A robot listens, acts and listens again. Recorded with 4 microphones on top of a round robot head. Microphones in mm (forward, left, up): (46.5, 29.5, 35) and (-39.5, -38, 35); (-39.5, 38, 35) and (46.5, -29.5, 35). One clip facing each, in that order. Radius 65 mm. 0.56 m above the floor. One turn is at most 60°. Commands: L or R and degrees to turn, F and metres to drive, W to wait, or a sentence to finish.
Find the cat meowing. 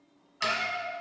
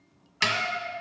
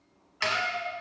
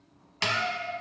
L60
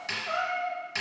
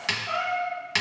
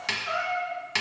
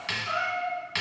L60
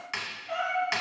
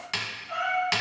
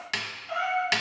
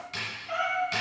L10
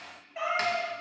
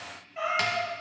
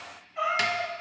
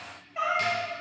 Facing the cat meowing.